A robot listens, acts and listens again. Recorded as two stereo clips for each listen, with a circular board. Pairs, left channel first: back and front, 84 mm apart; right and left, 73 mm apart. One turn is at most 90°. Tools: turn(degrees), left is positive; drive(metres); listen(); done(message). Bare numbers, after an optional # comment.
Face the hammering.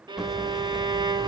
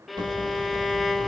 # The hammering: 85° left.
turn(85)
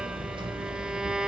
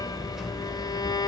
done("Facing the hammering, 2 to 4 m away.")